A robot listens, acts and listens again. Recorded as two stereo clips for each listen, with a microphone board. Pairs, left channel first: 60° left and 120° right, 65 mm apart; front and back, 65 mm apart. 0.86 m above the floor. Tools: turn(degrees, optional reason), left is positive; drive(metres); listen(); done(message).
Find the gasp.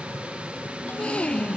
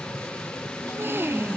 turn(degrees=130, reason="The gasp: 130° left.")
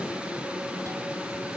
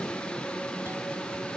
done("I heard a gasp from this way, but can't make it out now.")